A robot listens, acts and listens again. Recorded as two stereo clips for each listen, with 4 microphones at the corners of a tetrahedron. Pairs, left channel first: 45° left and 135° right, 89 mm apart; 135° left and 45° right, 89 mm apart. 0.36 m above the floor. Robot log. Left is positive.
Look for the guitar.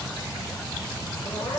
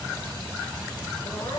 cmd idle
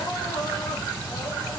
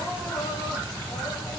cmd idle
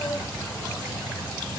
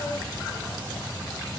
end: I can't make out a guitar, only crying.